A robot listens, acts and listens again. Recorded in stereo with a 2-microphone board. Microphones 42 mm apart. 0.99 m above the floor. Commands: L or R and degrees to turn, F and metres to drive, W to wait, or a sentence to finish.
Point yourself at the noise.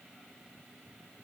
W
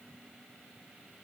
W
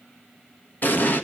L50
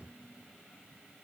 W
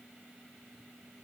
I heard an explosion, but can't make it out now. It was about straight ahead or 80° left.